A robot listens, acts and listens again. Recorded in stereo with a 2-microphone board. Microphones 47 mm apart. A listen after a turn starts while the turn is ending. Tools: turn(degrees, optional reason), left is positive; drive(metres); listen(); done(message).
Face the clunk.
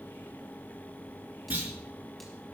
turn(degrees=-30, reason="The clunk: about 30° right or 150° right.")
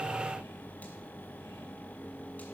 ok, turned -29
listen()
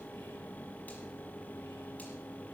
done("I heard a clunk, but can't make it out now. It was about 5° right or 120° right.")